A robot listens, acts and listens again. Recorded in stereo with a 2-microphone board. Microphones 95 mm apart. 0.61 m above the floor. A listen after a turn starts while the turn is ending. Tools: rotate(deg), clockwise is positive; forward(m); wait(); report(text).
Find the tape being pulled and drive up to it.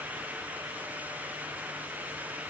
wait()
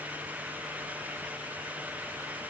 wait()
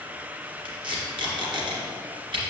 rotate(55)
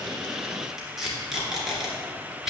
forward(1.0)
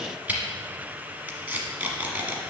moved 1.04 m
rotate(20)
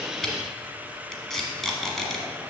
forward(1.0)
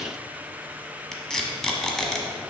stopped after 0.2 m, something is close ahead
report("Arrived at the tape being pulled, straight ahead.")